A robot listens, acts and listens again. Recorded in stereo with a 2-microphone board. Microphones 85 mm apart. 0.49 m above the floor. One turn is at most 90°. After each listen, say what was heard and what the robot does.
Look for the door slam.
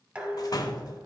The door slam: about 45° left or 135° left. Turn 45° left.
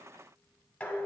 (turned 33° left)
Keep listening.
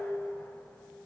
I heard a door slam, but can't make it out now. It was about 15° left or 100° left.